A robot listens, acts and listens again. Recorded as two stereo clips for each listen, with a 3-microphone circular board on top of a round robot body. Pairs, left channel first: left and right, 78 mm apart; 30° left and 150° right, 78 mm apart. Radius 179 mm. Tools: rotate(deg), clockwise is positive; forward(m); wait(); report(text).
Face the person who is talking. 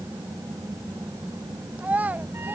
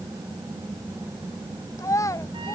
rotate(20)
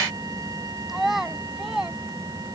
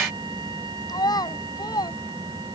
report("Found it: a child speaking, straight ahead.")